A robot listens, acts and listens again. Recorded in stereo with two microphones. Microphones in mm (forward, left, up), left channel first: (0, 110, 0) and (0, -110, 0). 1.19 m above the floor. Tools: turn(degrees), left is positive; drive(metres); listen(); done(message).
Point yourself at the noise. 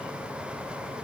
listen()
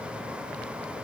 listen()
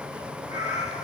turn(degrees=30)
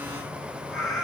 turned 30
done("Facing the cat meowing, over 4 m away.")